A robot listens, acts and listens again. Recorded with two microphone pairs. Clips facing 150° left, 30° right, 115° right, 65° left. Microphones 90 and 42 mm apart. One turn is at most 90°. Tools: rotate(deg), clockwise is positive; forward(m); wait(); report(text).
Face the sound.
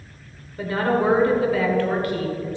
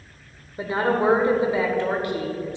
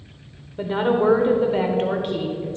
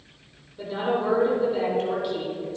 rotate(90)
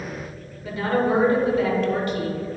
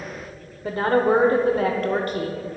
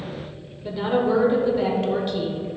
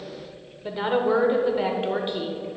report("Facing the woman speaking, 1 to 2 m away.")